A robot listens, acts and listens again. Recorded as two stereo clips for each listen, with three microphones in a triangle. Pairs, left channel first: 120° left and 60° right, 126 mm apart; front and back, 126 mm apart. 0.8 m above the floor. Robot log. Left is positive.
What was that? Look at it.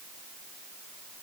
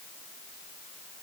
cmd idle
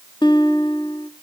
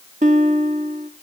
note: The guitar: 170° left.
cmd yaw +170
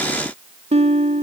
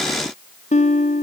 note: The guitar is now 25° right.
cmd yaw -25
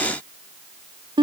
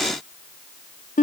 end: Found it: a guitar, straight ahead.